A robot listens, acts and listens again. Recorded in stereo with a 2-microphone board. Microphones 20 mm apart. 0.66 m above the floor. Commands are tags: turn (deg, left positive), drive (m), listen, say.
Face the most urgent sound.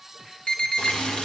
<turn deg="55"/>
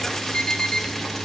<turn deg="60"/>
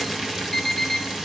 <turn deg="15"/>
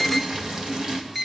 <say>Found it: an alarm, straight ahead, 1 to 2 m away.</say>